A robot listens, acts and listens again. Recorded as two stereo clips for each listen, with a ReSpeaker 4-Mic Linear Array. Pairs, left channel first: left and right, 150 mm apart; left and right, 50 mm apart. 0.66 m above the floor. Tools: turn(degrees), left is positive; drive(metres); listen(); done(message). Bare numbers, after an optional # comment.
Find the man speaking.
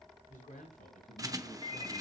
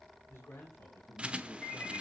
# The man speaking: about 60° left or 120° left.
turn(60)
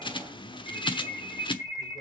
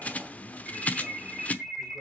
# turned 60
listen()
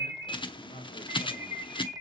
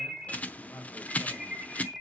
# So it is at 75° left.
turn(75)
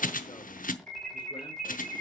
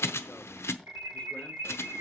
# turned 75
listen()
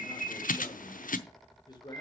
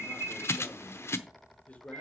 # The man speaking is now 30° left.
turn(30)
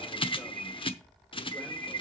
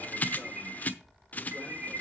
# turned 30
listen()
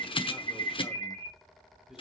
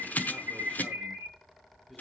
listen()
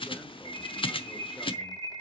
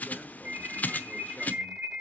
done("I heard a man speaking from this way, but can't make it out now.")